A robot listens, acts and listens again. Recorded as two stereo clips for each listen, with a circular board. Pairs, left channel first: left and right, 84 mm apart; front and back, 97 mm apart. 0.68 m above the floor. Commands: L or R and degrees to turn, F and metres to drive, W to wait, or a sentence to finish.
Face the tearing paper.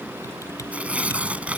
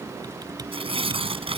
R165
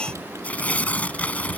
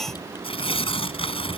L20
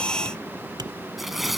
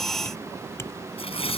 Found it: tearing paper, straight ahead.